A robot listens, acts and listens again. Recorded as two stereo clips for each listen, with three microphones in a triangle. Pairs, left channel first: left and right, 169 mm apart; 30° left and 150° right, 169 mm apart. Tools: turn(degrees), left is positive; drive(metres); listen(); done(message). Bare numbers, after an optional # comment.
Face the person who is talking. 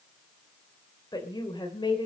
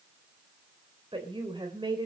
# The woman speaking: 150° left.
turn(150)
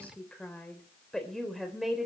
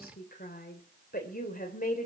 done("Facing the woman speaking, 2 to 4 m away.")